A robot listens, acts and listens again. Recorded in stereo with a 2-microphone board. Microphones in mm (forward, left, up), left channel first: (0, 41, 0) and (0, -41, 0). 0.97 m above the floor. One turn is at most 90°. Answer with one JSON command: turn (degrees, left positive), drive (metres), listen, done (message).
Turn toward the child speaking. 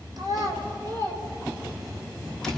{"turn": -50}
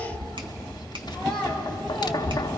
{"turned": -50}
{"turn": 10}
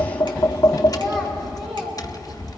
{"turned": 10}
{"done": "Found it: a child speaking, straight ahead."}